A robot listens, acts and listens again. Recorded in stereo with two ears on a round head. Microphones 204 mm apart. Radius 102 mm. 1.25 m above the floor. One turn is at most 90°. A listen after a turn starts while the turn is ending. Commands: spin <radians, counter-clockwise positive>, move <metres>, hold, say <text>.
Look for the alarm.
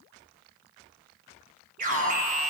spin -0.70
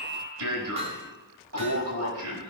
spin -1.57
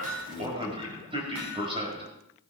spin -0.44
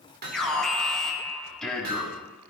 say Found it: an alarm, straight ahead.